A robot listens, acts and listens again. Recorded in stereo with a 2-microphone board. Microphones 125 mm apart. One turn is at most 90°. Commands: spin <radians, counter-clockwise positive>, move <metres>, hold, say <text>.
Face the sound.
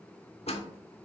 spin 0.96
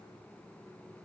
hold
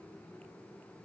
say I heard a door slam, but can't make it out now. It was about straight ahead or 70° left.